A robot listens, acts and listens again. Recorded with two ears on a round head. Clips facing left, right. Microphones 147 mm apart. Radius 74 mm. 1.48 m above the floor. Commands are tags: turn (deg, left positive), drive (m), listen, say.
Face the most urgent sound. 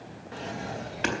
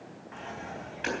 <listen/>
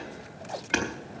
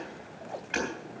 <listen/>
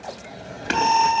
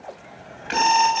<turn deg="-90"/>
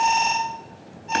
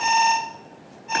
<say>Facing the alarm, 2 to 4 m away.</say>